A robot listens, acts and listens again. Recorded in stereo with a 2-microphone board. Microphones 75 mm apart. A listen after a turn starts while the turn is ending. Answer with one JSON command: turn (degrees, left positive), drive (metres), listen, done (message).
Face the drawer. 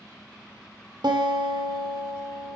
{"listen": true}
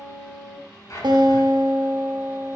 {"turn": 45}
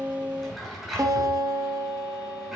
{"done": "Facing the drawer, over 4 m away."}